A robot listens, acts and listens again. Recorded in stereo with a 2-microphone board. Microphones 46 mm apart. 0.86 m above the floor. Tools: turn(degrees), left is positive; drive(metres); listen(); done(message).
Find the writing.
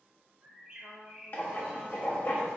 turn(degrees=45)
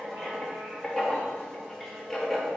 done("Found it: writing, straight ahead.")